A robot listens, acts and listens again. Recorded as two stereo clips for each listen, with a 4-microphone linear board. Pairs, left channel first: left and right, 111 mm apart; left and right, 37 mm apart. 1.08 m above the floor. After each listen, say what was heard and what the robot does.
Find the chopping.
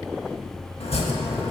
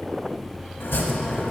The chopping: about 70° left or 110° left. Turn 70° left.
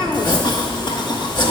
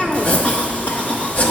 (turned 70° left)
So it is at 45° left. Turn 45° left.
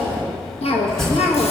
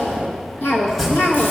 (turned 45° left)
Found it: chopping, straight ahead, 1 to 2 m away.